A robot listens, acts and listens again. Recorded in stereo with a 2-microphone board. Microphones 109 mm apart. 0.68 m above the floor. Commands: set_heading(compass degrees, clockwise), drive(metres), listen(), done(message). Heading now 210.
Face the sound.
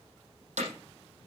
set_heading(300)
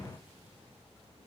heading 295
listen()
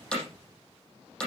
done("Found it: hammering, straight ahead.")